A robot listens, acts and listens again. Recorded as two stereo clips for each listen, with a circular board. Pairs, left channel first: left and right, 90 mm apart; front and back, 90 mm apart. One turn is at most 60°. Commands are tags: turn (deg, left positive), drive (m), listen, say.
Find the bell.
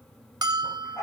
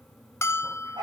<turn deg="-55"/>
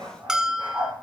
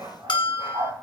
<turn deg="-10"/>
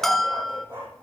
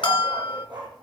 <say>Facing the bell, under 1 m away.</say>